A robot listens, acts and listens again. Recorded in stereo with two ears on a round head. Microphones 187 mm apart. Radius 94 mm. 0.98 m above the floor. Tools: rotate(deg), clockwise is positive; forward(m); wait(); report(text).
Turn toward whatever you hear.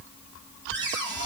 rotate(60)
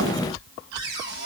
rotate(60)
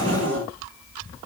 rotate(25)
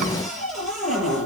report("Facing the cupboard door, over 4 m away.")